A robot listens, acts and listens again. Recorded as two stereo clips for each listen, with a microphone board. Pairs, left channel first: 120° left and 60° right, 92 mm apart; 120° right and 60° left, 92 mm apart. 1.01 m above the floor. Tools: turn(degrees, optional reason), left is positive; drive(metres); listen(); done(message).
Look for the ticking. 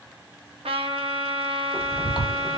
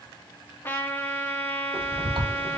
turn(degrees=25, reason="The ticking: 25° left.")
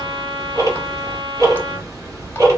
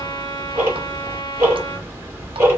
done("Facing the ticking.")